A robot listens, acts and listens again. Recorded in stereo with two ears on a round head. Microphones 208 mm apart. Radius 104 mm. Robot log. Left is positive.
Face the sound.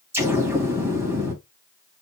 cmd yaw -30
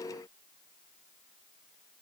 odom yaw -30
cmd idle
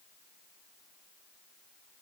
end: I heard an explosion, but can't make it out now. It was about 20° left or 140° right.